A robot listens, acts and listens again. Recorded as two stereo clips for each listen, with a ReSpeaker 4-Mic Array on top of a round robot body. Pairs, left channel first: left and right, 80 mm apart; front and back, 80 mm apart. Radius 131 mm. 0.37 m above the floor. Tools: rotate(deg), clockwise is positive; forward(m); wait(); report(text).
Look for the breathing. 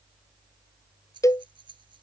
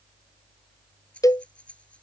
rotate(75)
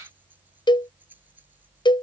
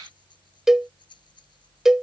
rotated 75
rotate(20)
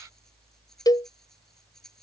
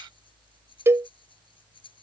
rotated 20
report("Found it: breathing, straight ahead.")